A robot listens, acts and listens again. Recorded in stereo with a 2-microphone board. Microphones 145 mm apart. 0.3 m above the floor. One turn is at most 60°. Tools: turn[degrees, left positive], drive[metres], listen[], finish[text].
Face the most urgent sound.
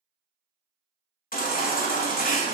Thought: The baby crying: about 75° left or 105° left.
Action: turn[60]
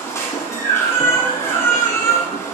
Thought: So it is at 20° left.
Action: turn[20]
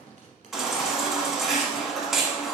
Action: finish[Facing the baby crying.]